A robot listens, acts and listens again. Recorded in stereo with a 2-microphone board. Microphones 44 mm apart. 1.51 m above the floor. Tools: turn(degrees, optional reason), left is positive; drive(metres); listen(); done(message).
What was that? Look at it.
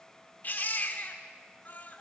turn(degrees=45, reason="The baby crying: about 45° left or 135° left.")
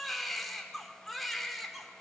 done("Facing the baby crying.")